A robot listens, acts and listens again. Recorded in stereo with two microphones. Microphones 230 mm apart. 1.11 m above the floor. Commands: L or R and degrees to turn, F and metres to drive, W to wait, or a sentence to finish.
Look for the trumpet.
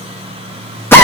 W
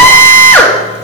W
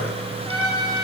L90
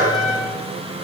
L15
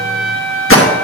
Facing the trumpet.